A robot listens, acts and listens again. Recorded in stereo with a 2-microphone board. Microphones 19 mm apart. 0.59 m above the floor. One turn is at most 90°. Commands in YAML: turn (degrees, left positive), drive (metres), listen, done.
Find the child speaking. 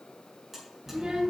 turn: -50
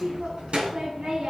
turn: -85
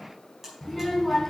turn: -10
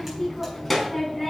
turn: -10
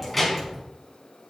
done: "Found it: a child speaking, straight ahead."